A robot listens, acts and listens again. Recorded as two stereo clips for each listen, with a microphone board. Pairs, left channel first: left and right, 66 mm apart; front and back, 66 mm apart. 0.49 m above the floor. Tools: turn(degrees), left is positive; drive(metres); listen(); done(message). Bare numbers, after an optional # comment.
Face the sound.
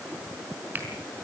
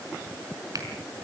listen()
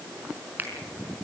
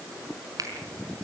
# The finger snap: 150° right.
turn(-150)
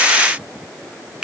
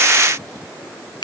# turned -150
# The finger snap is now 10° right.
turn(-10)
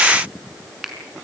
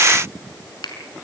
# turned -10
done("Facing the finger snap.")